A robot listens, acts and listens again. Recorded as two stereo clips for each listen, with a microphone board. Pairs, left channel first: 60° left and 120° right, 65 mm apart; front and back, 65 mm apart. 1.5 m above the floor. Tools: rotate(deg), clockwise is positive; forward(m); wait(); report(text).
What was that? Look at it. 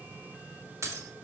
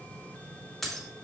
rotate(85)
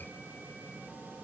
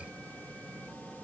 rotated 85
report("Facing where the breaking glass came from. I can't hear it now.")